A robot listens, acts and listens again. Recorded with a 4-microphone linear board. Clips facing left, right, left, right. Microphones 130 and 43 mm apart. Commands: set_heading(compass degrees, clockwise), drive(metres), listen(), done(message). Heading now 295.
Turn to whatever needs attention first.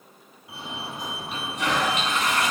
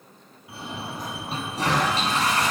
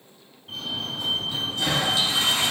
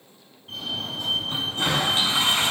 set_heading(265)
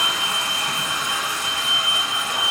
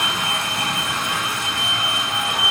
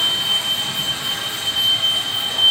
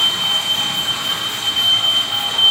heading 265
set_heading(290)
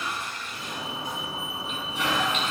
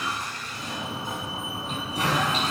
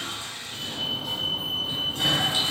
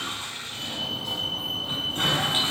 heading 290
done("Found it: a fire alarm, straight ahead.")